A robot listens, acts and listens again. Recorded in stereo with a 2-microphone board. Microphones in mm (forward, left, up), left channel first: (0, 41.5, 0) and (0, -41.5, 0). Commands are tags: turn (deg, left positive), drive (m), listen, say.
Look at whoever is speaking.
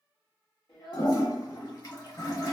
<turn deg="65"/>
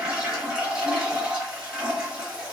<listen/>
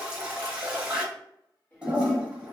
<turn deg="20"/>
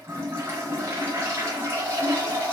<listen/>
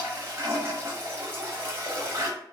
<listen/>
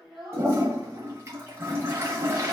<say>Found it: a child speaking, straight ahead, 1 to 2 m away.</say>